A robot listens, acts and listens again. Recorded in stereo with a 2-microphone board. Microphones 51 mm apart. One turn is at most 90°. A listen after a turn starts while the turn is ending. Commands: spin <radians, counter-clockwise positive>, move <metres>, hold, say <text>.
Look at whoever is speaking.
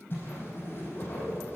hold
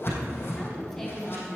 spin 0.52
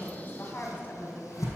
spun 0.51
spin 1.57
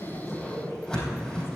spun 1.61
spin 0.87
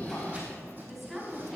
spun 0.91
say Facing the woman speaking.